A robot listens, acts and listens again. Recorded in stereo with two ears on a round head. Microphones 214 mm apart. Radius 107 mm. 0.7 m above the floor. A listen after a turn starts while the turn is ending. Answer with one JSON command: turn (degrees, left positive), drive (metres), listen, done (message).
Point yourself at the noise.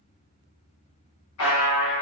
{"turn": 65}
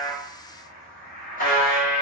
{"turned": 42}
{"turn": 40}
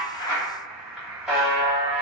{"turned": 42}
{"done": "Found it: a buzzer, straight ahead."}